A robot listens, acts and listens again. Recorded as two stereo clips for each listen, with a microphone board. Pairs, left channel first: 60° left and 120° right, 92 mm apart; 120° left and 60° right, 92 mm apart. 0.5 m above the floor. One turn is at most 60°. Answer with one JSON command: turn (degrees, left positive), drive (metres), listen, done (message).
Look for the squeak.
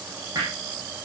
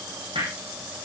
{"listen": true}
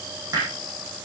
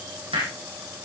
{"listen": true}
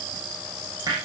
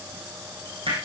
{"done": "I can't make out a squeak to turn to."}